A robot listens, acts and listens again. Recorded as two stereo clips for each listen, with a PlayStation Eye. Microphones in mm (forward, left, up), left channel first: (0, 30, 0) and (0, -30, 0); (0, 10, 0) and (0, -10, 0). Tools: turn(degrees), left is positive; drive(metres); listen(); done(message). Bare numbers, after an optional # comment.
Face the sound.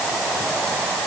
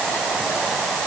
listen()
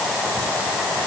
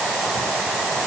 listen()
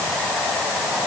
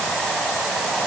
done("I can't make out anything to turn to.")